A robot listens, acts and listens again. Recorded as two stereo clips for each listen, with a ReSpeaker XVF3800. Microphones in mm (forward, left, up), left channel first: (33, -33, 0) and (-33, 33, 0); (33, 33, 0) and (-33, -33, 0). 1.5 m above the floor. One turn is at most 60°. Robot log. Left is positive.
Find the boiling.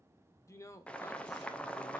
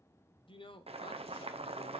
note: The boiling: 125° right.
cmd yaw -60
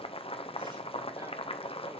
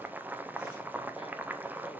note: The boiling is now 60° right.
cmd yaw -60
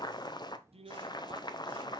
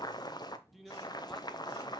end: Found it: boiling, straight ahead.